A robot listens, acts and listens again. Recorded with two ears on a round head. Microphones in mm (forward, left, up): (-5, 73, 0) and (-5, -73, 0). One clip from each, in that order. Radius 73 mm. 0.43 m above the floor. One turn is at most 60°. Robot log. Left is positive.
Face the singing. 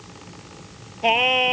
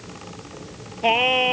note: The singing: about 15° left or 165° left.
cmd yaw +15
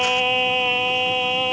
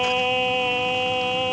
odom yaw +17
note: The singing: about 35° left or 145° left.
cmd yaw +35
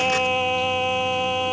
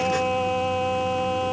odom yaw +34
note: So it is at 105° left.
cmd yaw +60
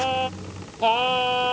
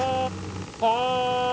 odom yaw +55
note: The singing is now 45° left.
cmd yaw +45
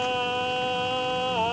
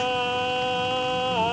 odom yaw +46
end: Facing the singing.